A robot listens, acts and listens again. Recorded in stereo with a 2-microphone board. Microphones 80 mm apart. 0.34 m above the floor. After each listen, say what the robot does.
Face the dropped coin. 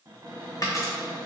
Turn 35° left.
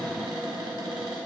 Keep listening.
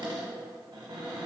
I heard a dropped coin, but can't make it out now. It was about straight ahead or 110° left.